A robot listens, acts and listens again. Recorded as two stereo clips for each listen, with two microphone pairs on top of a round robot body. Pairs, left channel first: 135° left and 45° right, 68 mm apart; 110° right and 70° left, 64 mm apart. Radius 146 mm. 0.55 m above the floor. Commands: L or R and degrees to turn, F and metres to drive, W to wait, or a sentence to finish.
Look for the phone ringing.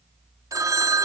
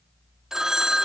R10
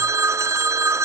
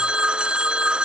Found it: a phone ringing, straight ahead.